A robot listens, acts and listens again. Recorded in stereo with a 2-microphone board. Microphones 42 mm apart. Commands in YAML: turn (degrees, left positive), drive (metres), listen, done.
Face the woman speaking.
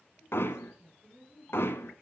turn: -35
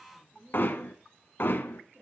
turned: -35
turn: -115
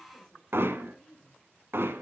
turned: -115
turn: 15
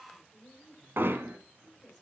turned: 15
done: "Found it: a woman speaking, straight ahead, over 4 m away."